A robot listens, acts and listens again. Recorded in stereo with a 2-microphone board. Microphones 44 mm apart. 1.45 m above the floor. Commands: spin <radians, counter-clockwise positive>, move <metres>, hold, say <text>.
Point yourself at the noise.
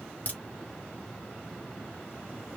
spin 0.79
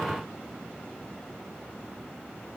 hold
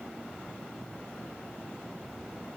say I heard a crack, but can't make it out now. It was about straight ahead or 90° left.